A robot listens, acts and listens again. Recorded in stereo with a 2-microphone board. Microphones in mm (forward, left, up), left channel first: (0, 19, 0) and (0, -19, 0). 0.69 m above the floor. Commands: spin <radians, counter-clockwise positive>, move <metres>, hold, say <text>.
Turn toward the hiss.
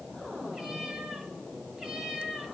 hold
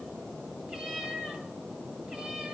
hold
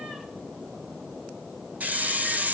spin -0.87
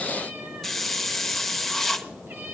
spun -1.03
say Facing the hiss, under 1 m away.